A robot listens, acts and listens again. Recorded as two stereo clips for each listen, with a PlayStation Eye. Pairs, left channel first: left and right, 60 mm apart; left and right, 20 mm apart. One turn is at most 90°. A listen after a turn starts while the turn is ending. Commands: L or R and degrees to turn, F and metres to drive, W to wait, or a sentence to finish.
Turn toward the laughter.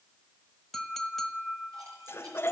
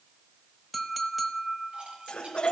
L40
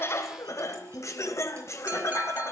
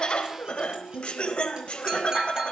L90
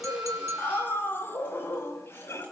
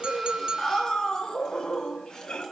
L45
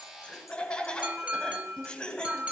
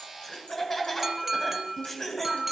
L15
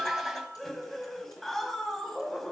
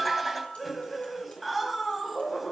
Found it: laughter, straight ahead, 2 to 4 m away.